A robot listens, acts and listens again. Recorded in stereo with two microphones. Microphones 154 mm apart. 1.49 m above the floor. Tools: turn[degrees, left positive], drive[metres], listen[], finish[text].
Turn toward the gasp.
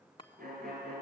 Action: listen[]
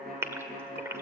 Thought: The gasp: about 15° right or 165° right.
Action: turn[-15]
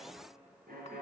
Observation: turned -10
Action: listen[]
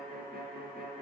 Action: finish[I heard a gasp, but can't make it out now. It was about 5° right or 155° right.]